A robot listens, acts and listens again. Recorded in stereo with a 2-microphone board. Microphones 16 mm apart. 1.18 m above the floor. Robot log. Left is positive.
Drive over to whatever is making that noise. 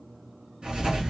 note: The writing: about 65° right or 115° right.
cmd yaw -65
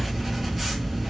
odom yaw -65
cmd fwd 1.0
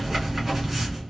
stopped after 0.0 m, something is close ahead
note: The writing is now 10° right.
cmd yaw -10
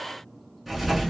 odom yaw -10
end: Something is in my way. I am facing the writing but have not reached it.